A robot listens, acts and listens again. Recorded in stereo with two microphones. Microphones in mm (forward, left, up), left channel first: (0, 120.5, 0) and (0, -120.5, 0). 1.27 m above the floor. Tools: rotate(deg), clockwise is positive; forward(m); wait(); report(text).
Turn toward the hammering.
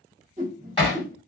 rotate(-20)
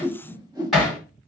report("Found it: hammering, straight ahead, 2 to 4 m away.")